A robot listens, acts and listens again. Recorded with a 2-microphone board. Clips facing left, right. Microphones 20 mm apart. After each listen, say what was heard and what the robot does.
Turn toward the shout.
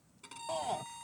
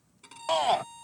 The shout: about 55° right or 125° right. Turn 55° right.
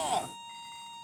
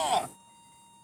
So it is at 15° right. Turn 15° right.
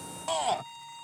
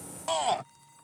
Facing the shout.